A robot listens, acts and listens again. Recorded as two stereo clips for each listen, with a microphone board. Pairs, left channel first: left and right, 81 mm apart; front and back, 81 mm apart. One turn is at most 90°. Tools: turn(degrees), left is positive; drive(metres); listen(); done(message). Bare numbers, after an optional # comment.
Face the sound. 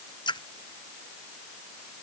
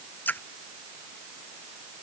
# The splash: 65° left.
turn(65)
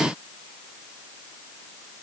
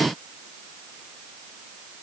done("Facing where the splash came from. I can't hear it now.")